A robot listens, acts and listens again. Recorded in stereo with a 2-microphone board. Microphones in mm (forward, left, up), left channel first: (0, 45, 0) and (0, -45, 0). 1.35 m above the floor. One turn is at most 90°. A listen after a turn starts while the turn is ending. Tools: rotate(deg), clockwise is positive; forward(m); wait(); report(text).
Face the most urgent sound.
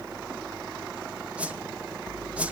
wait()
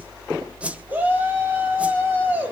rotate(20)
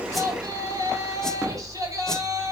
rotate(90)
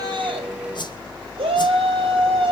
rotate(85)
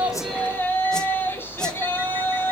rotate(-25)
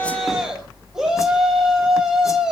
report("Facing the shout.")